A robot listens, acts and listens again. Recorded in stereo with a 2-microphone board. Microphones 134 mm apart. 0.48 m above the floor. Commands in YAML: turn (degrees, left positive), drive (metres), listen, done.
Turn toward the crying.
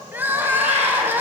turn: -15
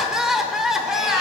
done: "Facing the crying."